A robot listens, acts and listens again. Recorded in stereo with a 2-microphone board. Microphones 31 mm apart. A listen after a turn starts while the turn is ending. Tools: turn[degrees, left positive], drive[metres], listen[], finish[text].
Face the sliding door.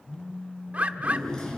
Thought: The sliding door: about 20° left or 160° left.
Action: turn[20]
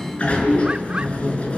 Thought: So it is at 140° left.
Action: turn[140]
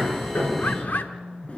Thought: The sliding door is now 40° left.
Action: turn[40]
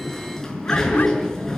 Thought: The sliding door is now 15° left.
Action: turn[15]
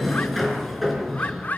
Action: finish[Facing the sliding door.]